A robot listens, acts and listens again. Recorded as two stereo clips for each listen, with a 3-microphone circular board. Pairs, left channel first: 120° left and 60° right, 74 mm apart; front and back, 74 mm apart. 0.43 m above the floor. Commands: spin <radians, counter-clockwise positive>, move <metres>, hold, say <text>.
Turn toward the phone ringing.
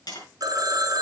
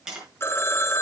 spin -0.87
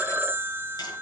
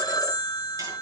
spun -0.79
say Facing the phone ringing.